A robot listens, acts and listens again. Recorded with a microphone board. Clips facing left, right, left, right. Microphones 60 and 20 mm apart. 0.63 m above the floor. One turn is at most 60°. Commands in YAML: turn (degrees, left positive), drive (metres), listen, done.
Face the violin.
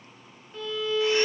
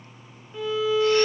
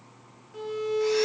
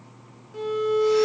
turn: -30
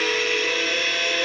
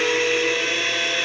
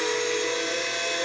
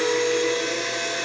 turn: 20
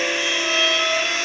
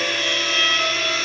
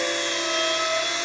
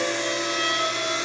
done: "Facing the violin."